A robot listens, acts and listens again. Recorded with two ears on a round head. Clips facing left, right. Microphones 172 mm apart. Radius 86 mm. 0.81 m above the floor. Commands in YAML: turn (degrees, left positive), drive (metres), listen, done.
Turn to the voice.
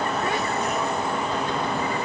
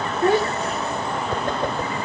turn: -30
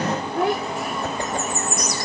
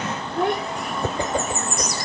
done: "Facing the child speaking."